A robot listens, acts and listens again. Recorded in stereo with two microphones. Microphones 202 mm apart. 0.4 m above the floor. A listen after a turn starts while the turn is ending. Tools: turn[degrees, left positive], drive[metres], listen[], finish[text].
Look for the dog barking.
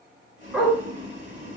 Action: turn[30]
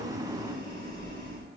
Action: listen[]
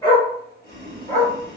Thought: So it is at 170° left.
Action: turn[170]
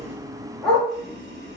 Action: finish[Found it: a dog barking, straight ahead, 2 to 4 m away.]